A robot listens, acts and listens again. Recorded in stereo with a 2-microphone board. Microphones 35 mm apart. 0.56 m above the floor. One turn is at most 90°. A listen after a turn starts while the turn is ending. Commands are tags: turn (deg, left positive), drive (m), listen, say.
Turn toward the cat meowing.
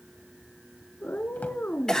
<turn deg="70"/>
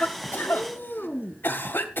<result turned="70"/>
<turn deg="40"/>
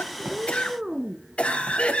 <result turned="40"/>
<turn deg="-20"/>
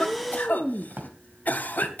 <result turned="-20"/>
<say>Facing the cat meowing.</say>